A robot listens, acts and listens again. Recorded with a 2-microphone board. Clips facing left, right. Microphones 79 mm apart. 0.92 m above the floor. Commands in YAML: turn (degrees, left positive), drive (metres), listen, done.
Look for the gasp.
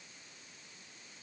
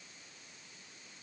listen: true
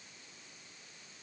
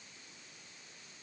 listen: true
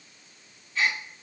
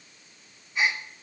turn: -20
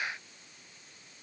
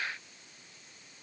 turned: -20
listen: true
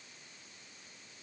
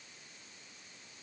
done: "I heard a gasp, but can't make it out now. It was about straight ahead or 140° right."